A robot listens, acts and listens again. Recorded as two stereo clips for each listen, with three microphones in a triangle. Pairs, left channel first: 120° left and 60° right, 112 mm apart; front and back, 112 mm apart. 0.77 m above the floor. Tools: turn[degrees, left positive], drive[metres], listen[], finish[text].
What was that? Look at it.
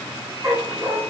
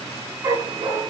Thought: The dog barking: 125° right.
Action: turn[-125]
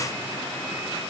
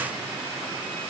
Action: listen[]
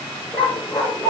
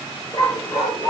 Thought: The dog barking is now 45° left.
Action: turn[45]
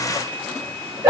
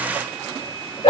Action: finish[Facing the dog barking.]